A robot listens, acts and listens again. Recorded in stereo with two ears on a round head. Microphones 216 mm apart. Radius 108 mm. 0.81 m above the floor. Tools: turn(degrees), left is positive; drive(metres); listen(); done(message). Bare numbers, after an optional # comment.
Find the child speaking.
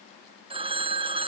listen()
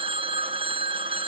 listen()
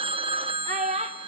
# The child speaking: about 30° right or 150° right.
turn(-30)
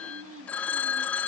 listen()
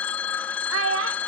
# So it is at 120° right.
turn(-120)
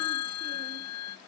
listen()
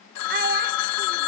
# The child speaking is now 40° right.
turn(-40)
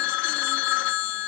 listen()
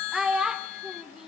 done("Facing the child speaking.")